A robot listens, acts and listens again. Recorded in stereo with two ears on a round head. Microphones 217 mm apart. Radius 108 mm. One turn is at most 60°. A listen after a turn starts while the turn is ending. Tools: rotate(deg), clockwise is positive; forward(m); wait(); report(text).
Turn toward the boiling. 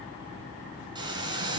rotate(20)
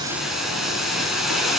report("Found it: boiling, straight ahead, 2 to 4 m away.")